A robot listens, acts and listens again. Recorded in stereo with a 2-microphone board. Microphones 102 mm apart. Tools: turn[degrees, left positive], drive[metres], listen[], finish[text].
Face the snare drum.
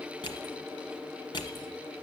Action: listen[]
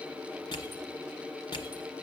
Action: listen[]
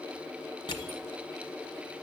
Action: finish[I can't make out a snare drum, only crushing.]